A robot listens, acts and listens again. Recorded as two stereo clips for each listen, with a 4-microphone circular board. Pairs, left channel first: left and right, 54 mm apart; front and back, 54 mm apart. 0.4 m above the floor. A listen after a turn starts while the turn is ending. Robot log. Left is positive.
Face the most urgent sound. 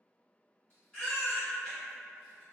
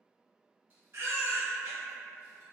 note: The baby crying: 160° left.
cmd yaw +160
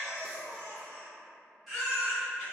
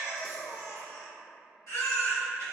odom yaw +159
end: Facing the baby crying, 1 to 2 m away.